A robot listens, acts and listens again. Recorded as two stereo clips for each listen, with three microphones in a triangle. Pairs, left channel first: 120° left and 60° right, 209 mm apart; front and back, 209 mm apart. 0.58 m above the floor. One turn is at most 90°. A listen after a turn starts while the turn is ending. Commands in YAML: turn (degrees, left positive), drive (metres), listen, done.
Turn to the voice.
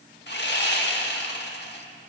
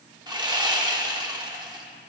listen: true
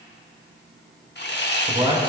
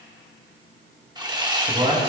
turn: -90
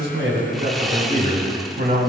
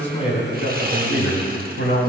turn: -25
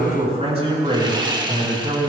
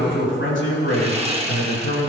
done: "Facing the man speaking."